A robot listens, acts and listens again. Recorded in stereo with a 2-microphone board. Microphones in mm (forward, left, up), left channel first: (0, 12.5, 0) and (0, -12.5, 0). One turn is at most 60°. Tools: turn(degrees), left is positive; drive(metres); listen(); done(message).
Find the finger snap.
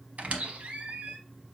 listen()
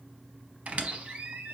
listen()
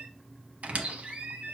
done("I can't make out a finger snap, only a squeak.")